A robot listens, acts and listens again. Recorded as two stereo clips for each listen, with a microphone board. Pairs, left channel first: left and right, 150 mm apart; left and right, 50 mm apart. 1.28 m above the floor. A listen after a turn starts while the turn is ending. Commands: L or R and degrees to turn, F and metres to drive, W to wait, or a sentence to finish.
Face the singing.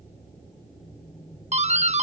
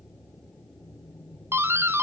W
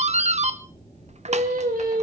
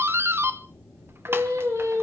R90
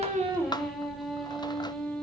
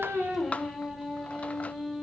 Facing the singing.